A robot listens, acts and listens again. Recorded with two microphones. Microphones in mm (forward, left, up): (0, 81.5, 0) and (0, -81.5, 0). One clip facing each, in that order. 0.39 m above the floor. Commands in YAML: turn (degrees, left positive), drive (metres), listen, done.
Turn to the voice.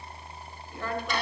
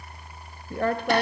turn: -60
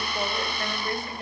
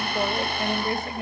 turn: -25
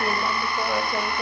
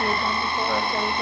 listen: true
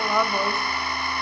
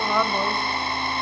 done: "Found it: a woman speaking, straight ahead, 1 to 2 m away."